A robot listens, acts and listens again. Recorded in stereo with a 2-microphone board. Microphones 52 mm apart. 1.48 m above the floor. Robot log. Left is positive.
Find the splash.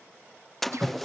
cmd yaw +30
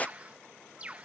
note: So it is at 150° left.
cmd yaw +150
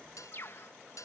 end: I heard a splash from this way, but can't make it out now.